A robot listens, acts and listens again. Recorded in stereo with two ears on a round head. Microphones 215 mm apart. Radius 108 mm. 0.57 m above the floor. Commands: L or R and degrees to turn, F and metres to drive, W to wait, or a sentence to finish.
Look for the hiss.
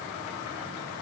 W
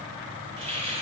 R25
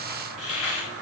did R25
Found it: a hiss, straight ahead, 2 to 4 m away.